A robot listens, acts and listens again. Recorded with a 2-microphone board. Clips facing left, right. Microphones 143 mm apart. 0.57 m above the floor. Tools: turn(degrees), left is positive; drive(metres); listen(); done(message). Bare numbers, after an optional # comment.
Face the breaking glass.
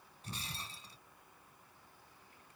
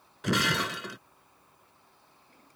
turn(-90)
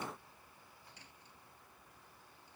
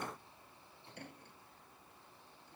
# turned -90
done("Facing where the breaking glass came from. I can't hear it now.")